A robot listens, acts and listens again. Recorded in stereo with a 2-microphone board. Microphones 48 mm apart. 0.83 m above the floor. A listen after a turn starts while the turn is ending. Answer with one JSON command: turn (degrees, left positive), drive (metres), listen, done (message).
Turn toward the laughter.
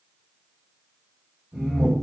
{"turn": -15}
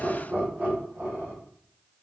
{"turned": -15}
{"turn": -135}
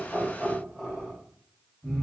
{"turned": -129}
{"turn": 15}
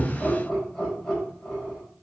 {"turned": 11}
{"done": "Facing the laughter, 2 to 4 m away."}